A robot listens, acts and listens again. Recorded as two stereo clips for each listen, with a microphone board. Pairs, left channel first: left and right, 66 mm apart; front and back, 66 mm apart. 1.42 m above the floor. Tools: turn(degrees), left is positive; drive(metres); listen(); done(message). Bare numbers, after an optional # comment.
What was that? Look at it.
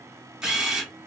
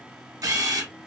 # The camera shutter: 170° right.
turn(-170)
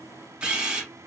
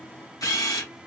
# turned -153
# The camera shutter is now 15° right.
turn(-15)
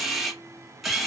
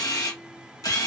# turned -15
done("Found it: a camera shutter, straight ahead.")